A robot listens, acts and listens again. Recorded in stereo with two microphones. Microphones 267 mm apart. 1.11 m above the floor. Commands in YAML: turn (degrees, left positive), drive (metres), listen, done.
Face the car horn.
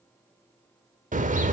turn: -30
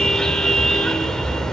done: "Found it: a car horn, straight ahead, 2 to 4 m away."